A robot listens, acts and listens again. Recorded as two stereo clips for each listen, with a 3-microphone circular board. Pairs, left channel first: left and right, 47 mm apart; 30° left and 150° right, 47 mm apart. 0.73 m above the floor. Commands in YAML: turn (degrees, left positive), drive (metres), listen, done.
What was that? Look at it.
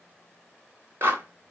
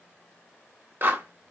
turn: -120
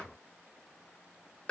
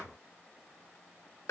turn: 25
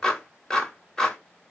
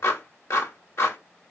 turn: 15
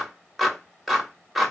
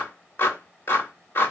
done: "Found it: a clap, straight ahead, 1 to 2 m away."